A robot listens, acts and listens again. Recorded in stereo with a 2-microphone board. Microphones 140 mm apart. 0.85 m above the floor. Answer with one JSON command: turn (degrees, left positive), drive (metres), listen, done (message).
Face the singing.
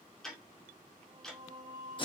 {"turn": -60}
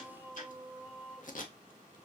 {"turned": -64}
{"done": "Facing the singing."}